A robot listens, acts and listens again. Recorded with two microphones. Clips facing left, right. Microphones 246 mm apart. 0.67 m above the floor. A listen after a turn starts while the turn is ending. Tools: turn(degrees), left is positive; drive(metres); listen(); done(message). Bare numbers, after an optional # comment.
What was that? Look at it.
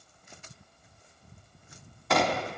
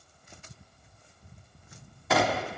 turn(-30)
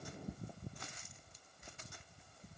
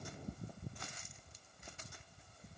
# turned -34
listen()
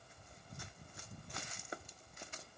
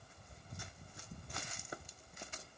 done("I heard a gunshot, but can't make it out now. It was about 30° left or 145° right.")